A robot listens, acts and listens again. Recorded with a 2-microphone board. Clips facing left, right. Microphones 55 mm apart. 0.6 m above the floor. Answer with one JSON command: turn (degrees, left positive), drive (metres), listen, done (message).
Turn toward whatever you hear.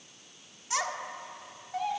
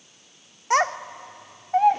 {"turn": -50}
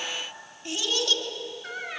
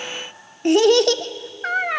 {"turn": -75}
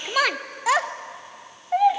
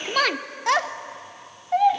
{"done": "Facing the child speaking, under 1 m away."}